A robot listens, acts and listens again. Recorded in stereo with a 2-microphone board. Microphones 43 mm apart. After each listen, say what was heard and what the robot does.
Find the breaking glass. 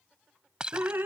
The breaking glass: about 20° right or 160° right. Turn 20° right.
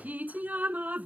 Keep listening.
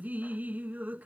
I heard breaking glass, but can't make it out now. It was about straight ahead or 140° right.